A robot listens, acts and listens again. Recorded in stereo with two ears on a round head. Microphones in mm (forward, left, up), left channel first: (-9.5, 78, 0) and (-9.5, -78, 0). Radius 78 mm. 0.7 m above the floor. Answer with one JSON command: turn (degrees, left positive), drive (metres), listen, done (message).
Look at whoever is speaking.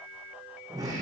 {"listen": true}
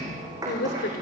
{"turn": 55}
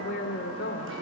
{"turn": 65}
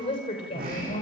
{"turn": 35}
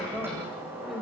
{"done": "Facing the woman speaking, over 4 m away."}